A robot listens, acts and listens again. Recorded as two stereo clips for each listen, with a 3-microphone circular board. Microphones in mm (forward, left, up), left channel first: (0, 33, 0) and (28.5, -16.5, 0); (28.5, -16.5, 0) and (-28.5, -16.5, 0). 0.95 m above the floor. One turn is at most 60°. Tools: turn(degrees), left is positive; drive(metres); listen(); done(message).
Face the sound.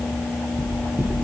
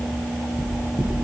done("Found it: knocking, straight ahead, over 4 m away.")